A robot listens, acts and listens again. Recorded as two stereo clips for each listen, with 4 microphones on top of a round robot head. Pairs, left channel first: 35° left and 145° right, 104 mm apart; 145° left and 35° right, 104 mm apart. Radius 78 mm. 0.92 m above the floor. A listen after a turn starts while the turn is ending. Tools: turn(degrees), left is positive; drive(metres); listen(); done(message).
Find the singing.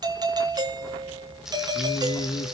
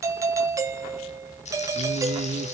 turn(degrees=-10)
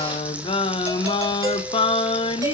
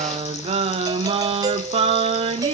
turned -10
done("Found it: singing, straight ahead.")